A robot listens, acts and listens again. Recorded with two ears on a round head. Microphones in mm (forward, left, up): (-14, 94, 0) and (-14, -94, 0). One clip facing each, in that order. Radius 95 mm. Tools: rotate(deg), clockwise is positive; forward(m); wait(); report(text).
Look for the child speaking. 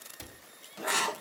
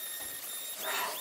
wait()
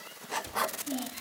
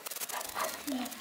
rotate(-30)
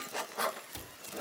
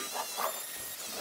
wait()
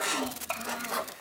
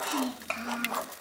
rotate(30)
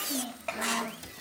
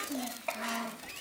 report("Facing the child speaking.")